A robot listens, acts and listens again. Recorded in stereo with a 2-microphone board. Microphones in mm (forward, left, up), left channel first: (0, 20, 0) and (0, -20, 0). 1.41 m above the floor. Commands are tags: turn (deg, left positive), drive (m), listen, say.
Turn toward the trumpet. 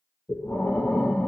<listen/>
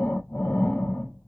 <listen/>
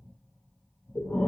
<say>I can't make out a trumpet, only breathing.</say>